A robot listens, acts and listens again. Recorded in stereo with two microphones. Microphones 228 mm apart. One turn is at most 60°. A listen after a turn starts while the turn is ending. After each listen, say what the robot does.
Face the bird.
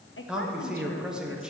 Keep listening.
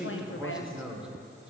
Keep listening.
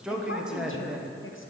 I can't make out a bird, only a woman speaking and a man speaking.